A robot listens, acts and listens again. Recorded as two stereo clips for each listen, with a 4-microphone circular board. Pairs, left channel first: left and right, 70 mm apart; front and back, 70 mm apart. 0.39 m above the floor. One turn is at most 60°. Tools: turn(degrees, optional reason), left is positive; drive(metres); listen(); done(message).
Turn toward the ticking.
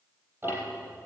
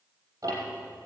turn(degrees=-60, reason="The ticking: 145° right.")
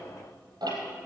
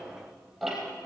turn(degrees=-60, reason="The ticking is now 90° right.")
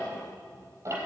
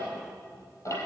turn(degrees=-45, reason="The ticking is now 45° right.")
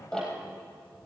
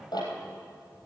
turn(degrees=10, reason="The ticking is now 10° left.")
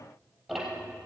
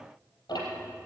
done("Facing the ticking, over 4 m away.")